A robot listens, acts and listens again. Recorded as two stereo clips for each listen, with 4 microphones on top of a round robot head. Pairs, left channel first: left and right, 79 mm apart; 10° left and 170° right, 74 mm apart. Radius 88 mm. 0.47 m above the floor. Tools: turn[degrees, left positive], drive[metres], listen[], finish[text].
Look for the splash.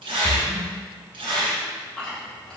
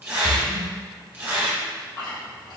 Thought: The splash: 30° right.
Action: turn[-30]
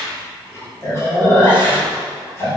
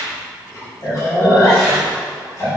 Action: finish[I heard a splash from this way, but can't make it out now.]